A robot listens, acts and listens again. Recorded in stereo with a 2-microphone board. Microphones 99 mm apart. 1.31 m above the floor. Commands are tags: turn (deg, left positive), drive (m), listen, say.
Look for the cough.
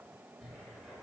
<listen/>
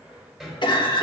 <turn deg="50"/>
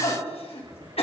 <turn deg="75"/>
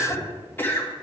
<turn deg="20"/>
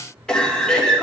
<say>Facing the cough.</say>